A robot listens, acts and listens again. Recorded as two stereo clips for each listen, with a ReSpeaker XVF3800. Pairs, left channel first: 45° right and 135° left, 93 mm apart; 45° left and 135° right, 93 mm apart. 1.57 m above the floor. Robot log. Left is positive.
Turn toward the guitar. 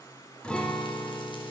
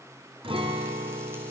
note: The guitar: 125° right.
cmd yaw -125
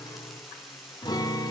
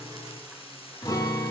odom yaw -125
end: Facing the guitar.